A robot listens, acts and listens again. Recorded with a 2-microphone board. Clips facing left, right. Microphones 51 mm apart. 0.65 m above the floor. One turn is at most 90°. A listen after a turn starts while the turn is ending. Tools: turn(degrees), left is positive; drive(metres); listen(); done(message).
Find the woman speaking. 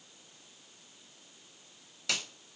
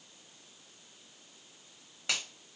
listen()
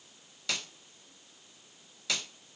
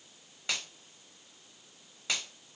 listen()
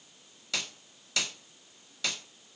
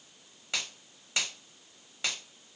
done("I can't make out a woman speaking to turn to.")